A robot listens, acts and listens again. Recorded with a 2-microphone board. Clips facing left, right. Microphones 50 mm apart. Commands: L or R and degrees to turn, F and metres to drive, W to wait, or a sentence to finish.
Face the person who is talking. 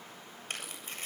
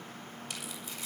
W
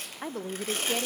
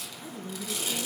L60
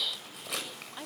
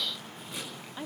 Facing the woman speaking.